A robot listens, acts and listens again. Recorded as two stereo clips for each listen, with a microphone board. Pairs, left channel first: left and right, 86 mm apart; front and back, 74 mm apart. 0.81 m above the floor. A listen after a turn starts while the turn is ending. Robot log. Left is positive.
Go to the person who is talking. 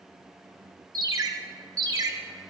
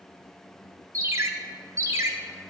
cmd idle
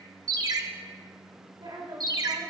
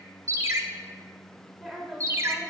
note: The woman speaking: 90° right.
cmd yaw -90
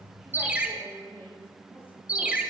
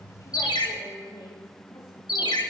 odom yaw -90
note: The woman speaking is now 25° left.
cmd yaw +25
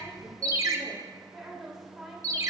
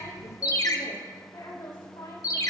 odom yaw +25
cmd fwd 1.0
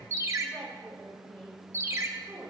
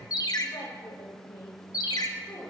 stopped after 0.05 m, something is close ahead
end: Something is in my way. I am facing the woman speaking but have not reached it.